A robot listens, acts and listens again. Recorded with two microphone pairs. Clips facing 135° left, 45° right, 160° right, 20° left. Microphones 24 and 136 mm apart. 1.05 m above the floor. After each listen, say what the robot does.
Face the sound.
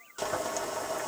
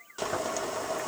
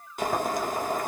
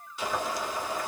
Turn 125° right.
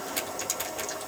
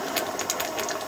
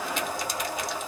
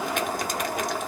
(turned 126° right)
Facing the boiling.